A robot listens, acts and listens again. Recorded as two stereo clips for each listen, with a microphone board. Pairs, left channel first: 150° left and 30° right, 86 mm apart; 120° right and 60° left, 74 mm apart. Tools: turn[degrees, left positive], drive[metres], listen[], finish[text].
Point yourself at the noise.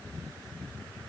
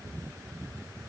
Action: listen[]
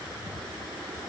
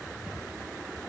Action: listen[]
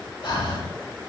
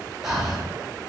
Thought: The breathing: 145° left.
Action: turn[145]
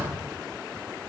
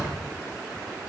Thought: The breathing is now 35° right.
Action: turn[-35]
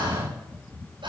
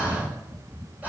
Thought: The breathing is now 10° right.
Action: turn[-10]
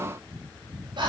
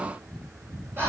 Action: finish[Found it: breathing, straight ahead, over 4 m away.]